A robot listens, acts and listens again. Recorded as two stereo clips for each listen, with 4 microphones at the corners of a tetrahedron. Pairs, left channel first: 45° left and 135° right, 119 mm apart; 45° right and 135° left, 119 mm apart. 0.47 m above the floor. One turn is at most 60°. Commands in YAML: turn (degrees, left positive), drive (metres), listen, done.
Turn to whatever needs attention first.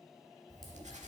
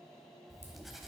listen: true
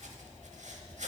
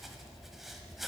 listen: true
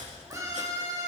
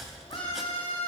turn: -60
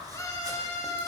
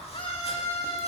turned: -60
turn: -15
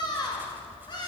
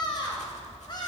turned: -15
done: "Facing the scream."